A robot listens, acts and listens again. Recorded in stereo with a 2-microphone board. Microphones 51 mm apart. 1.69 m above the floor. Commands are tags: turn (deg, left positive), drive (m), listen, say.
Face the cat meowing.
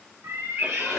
<turn deg="-55"/>
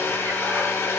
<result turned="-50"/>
<listen/>
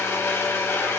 <listen/>
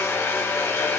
<say>I heard a cat meowing, but can't make it out now. It was about 5° right or 75° right.</say>